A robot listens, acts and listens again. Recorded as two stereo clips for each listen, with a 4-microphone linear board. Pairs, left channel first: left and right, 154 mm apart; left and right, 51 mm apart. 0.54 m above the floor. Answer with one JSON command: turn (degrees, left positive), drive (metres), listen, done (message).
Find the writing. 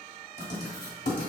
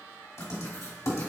{"turn": 90}
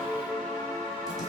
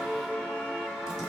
{"listen": true}
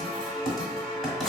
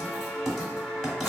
{"done": "Facing the writing, 1 to 2 m away."}